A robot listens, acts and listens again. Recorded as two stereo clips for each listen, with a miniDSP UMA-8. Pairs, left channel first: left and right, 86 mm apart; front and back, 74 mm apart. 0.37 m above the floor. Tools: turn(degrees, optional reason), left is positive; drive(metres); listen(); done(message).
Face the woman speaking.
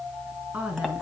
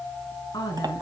turn(degrees=-15, reason="The woman speaking: 15° right.")
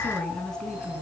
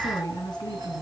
turn(degrees=10, reason="The woman speaking is now 10° left.")
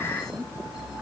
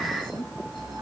done("Found it: a woman speaking, straight ahead, 2 to 4 m away.")